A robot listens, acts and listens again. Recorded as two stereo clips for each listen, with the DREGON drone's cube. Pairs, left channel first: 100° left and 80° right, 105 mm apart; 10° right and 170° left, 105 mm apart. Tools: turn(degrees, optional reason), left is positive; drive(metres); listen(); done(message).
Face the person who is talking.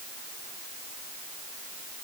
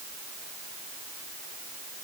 listen()
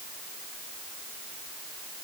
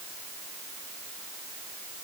listen()
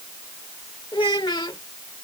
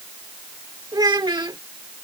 turn(degrees=130, reason="The child speaking: 130° left.")
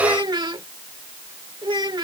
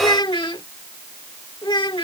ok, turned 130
turn(degrees=-40, reason="The child speaking is now 40° right.")
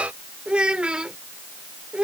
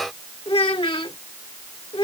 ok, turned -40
done("Found it: a child speaking, straight ahead.")